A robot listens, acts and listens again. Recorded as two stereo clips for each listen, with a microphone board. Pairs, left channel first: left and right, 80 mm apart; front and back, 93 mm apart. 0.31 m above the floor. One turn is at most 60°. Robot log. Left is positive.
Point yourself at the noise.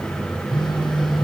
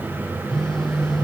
note: The phone buzzing: 90° left.
cmd yaw +60
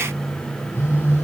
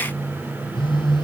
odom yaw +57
note: The phone buzzing is now 30° left.
cmd yaw +30
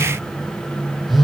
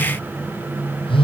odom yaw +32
end: Found it: a phone buzzing, straight ahead.